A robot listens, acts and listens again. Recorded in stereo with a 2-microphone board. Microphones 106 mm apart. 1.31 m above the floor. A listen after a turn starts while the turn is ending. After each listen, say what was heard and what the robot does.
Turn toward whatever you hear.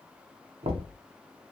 The knocking: about 65° right or 115° right. Turn 65° right.
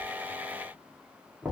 Facing the knocking, under 1 m away.